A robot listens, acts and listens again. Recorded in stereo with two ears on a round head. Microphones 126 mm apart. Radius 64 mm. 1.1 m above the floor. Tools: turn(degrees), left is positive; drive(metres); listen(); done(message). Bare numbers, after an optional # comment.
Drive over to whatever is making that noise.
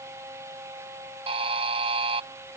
# The buzzer: about 45° right or 135° right.
turn(-45)
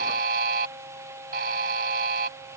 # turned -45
# So it is at 90° right.
turn(-90)
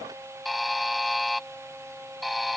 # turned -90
drive(1.0)
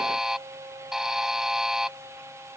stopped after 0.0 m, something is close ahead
done("Something is in my way. I am facing the buzzer but have not reached it.")